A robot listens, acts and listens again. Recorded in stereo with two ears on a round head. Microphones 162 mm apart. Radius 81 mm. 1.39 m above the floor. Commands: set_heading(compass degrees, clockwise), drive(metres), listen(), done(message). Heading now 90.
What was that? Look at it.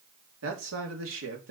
set_heading(165)
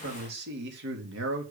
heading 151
set_heading(221)
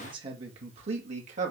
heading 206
set_heading(246)
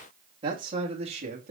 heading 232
set_heading(267)
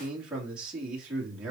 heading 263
done("Found it: a man speaking, straight ahead.")